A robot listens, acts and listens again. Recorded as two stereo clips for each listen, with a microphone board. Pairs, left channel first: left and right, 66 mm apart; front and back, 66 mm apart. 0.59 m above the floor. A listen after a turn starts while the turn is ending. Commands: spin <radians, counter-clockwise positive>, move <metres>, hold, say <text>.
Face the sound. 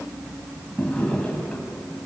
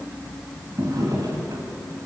spin 2.88
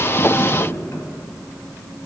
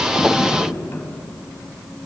spin 0.79
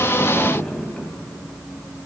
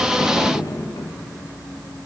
spin 0.26
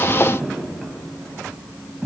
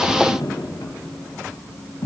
say Found it: a drawer, straight ahead.